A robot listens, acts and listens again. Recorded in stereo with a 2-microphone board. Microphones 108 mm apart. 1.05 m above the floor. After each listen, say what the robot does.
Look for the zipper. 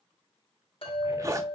Turn 30° right.
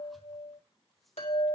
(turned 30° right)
Keep listening.
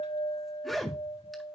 Found it: a zipper, straight ahead, 1 to 2 m away.